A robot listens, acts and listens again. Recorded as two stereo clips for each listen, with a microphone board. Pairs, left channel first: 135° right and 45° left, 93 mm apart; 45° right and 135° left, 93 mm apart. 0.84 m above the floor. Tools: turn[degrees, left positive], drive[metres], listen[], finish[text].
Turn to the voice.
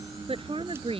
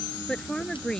Thought: The woman speaking: 40° left.
Action: turn[40]
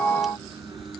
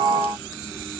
Action: listen[]
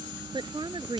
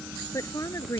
Thought: The woman speaking is now 15° left.
Action: turn[15]
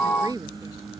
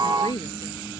Action: finish[Found it: a woman speaking, straight ahead.]